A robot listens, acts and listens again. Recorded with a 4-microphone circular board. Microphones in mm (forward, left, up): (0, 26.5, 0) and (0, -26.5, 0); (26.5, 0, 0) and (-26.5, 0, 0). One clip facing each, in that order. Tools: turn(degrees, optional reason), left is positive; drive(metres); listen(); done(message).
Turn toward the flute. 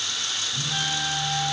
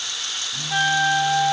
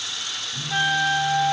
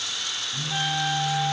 turn(degrees=-55, reason="The flute: 55° right.")
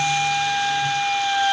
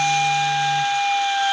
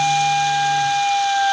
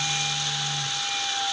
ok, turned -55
done("Found it: a flute, straight ahead.")